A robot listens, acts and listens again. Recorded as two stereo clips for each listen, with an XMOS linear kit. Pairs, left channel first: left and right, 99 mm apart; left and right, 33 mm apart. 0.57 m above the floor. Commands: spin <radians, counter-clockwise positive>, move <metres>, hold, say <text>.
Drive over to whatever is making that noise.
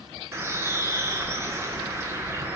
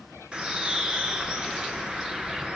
spin -0.44
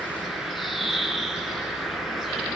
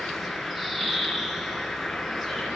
move 1.0
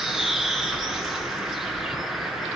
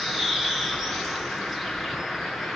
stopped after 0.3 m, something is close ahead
say Something is in my way. I am facing the bird but have not reached it.